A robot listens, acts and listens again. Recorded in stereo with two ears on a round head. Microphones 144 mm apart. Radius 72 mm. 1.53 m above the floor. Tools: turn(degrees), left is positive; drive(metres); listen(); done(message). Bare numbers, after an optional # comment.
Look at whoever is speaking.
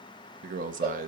# The man speaking: about 50° right or 130° right.
turn(-50)
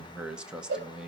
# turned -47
done("Found it: a man speaking, straight ahead.")